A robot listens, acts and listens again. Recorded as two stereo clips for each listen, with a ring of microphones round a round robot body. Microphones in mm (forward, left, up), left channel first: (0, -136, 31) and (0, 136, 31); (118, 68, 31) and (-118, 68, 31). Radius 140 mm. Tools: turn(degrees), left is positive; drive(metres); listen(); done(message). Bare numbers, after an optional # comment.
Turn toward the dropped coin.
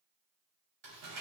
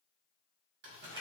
listen()
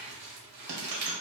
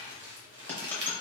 # The dropped coin: 80° left.
turn(80)
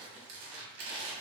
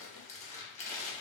done("Facing where the dropped coin came from. I can't hear it now.")